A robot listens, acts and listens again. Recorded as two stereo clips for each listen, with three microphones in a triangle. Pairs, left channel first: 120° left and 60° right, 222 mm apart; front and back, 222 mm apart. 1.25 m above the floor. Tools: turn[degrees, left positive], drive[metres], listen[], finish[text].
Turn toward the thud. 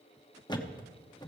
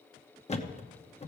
Thought: The thud: 55° left.
Action: turn[55]
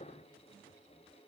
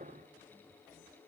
Action: finish[I heard a thud from this way, but can't make it out now.]